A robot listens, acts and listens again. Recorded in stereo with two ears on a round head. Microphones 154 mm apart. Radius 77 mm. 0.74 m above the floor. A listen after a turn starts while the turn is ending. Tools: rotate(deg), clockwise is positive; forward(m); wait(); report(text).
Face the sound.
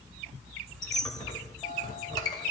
rotate(-25)
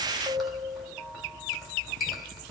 report("Facing the squeak, 1 to 2 m away.")